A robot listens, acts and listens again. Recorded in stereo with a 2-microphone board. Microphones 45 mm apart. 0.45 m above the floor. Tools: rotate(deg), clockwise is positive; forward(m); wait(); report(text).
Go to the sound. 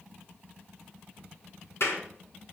rotate(-90)
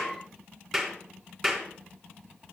forward(1.0)
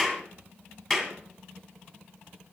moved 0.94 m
rotate(-10)
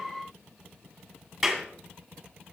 forward(1.0)
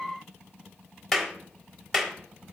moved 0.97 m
forward(1.0)
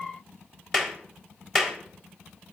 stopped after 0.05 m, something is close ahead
rotate(-10)
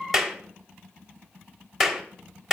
report("Arrived at the clap, straight ahead.")